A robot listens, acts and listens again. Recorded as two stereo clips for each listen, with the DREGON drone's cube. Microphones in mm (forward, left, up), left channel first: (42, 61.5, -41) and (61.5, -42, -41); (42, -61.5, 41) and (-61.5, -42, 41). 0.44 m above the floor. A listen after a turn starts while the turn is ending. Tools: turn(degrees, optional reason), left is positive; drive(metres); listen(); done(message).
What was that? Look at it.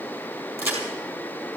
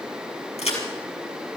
turn(degrees=-15, reason="The crack: 15° right.")
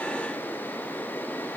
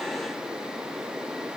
done("I heard a crack from this way, but can't make it out now.")